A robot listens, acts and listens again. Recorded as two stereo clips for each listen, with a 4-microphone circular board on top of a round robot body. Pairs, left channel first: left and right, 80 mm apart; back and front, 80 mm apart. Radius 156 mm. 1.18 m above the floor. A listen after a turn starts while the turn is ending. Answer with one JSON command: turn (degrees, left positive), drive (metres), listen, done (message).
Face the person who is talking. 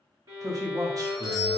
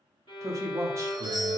{"turn": -50}
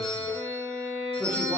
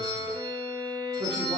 {"listen": true}
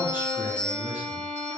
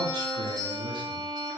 {"listen": true}
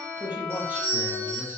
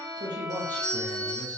{"turn": -20}
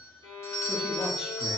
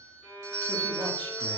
{"listen": true}
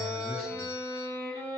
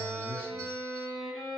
{"listen": true}
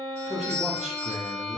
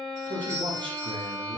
{"done": "Found it: a man speaking, straight ahead."}